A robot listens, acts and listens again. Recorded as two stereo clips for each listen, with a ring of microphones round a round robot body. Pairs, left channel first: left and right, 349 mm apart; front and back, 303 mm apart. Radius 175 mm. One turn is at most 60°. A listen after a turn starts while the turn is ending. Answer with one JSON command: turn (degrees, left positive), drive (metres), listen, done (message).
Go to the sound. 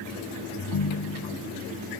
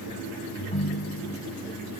{"turn": 60}
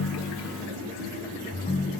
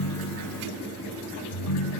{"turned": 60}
{"turn": 20}
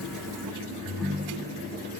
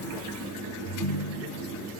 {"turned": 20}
{"drive": 1.0}
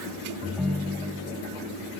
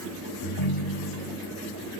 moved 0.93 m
{"drive": 1.0}
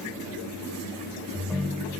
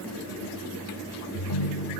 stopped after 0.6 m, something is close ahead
{"done": "I am next to the ringtone."}